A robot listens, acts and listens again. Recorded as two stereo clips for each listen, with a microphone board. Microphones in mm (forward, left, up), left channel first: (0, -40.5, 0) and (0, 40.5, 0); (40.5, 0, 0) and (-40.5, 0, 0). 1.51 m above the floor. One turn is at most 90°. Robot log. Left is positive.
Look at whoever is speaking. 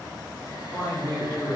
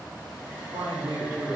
note: The woman speaking: 165° right.
cmd yaw -90
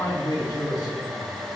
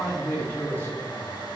note: The woman speaking is now 65° right.
cmd yaw -65
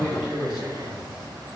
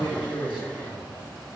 note: The woman speaking is now 10° left.
cmd yaw +10
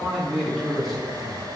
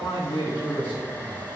end: Found it: a woman speaking, straight ahead.